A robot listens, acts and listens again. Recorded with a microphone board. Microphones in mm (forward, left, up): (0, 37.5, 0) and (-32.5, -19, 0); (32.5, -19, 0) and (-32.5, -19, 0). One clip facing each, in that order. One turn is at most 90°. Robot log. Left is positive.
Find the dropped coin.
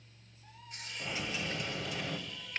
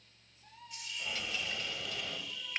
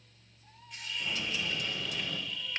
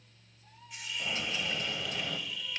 note: The dropped coin: 130° left.
cmd yaw +90
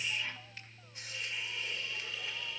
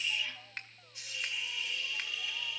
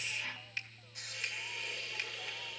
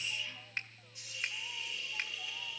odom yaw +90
note: Nothing new. It was at 40° left.
cmd yaw +40
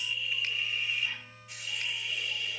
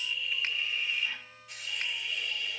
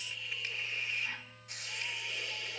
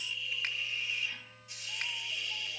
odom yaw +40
end: I heard a dropped coin from this way, but can't make it out now.